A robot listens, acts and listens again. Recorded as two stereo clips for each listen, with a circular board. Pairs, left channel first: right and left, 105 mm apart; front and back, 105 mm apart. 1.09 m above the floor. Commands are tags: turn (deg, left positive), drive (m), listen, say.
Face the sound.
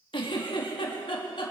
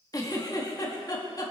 <turn deg="-55"/>
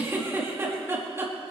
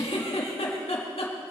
<turn deg="25"/>
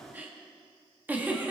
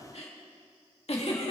<turn deg="15"/>
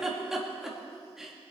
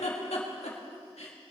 <say>Found it: a giggle, straight ahead.</say>